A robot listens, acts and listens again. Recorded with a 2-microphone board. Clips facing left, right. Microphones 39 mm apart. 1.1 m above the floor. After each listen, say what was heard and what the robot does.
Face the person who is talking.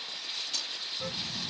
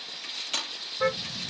The child speaking: about 35° left or 145° left. Turn 35° left.
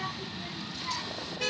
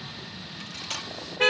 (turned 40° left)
So it is at 105° left. Turn 105° left.
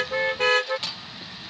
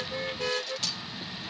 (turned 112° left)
Found it: a child speaking, straight ahead.